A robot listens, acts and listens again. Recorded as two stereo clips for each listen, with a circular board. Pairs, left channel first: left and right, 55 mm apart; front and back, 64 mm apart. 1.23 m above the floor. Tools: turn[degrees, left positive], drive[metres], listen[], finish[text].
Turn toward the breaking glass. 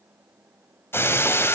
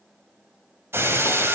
Thought: The breaking glass: 130° left.
Action: turn[130]
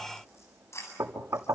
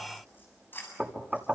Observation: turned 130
Action: finish[I heard breaking glass from this way, but can't make it out now.]